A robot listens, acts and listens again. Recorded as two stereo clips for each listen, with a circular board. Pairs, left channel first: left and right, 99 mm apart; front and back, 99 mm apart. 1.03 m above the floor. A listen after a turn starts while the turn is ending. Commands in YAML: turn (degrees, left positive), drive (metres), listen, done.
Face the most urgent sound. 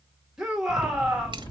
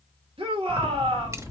turn: -175
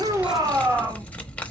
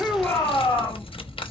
turn: -40
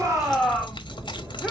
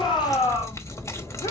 done: "Found it: a shout, straight ahead."